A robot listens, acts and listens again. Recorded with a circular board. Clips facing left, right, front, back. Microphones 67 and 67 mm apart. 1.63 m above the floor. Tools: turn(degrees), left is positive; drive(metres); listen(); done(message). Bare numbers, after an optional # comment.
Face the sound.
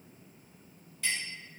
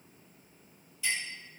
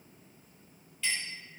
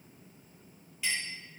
# The clink: 100° left.
turn(100)
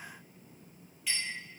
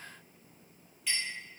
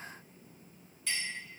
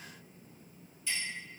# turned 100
done("Facing the clink, 1 to 2 m away.")